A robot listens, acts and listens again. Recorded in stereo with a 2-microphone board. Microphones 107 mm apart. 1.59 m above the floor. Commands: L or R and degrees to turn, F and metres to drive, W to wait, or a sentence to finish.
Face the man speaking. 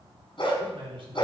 R60
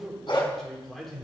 Found it: a man speaking, straight ahead, over 4 m away.